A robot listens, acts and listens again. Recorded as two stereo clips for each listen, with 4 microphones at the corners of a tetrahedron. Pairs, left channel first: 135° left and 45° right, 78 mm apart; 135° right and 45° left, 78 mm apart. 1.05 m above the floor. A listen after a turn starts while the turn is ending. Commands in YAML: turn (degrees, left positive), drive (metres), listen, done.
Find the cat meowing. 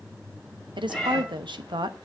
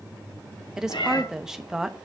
turn: -135
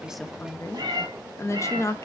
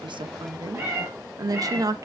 turn: -10
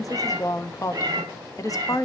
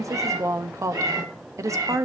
done: "Found it: a cat meowing, straight ahead, over 4 m away."